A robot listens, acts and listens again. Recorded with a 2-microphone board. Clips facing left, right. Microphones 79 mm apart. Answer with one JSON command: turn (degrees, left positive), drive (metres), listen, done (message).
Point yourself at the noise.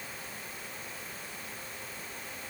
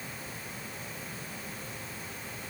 {"listen": true}
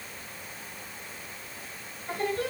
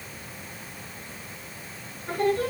{"turn": -60}
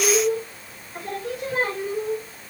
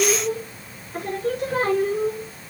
{"turn": -50}
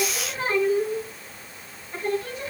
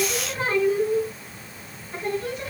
{"done": "Facing the singing."}